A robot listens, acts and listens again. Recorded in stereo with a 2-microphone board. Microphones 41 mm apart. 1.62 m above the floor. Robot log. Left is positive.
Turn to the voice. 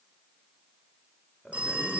cmd yaw +30
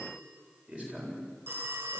note: So it is at 30° right.
cmd yaw -30
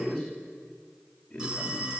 note: The man speaking is now 15° left.
cmd yaw +15
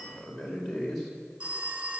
end: Found it: a man speaking, straight ahead.